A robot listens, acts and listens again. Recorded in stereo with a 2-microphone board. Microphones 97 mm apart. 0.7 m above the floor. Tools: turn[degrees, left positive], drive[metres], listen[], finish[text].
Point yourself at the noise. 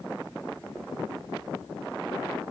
Action: listen[]
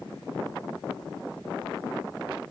Action: listen[]
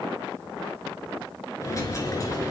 Thought: The dropped coin: about 35° left or 145° left.
Action: turn[35]
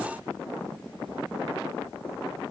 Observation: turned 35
Action: listen[]
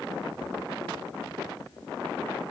Action: finish[I heard a dropped coin, but can't make it out now. It was about straight ahead or 110° left.]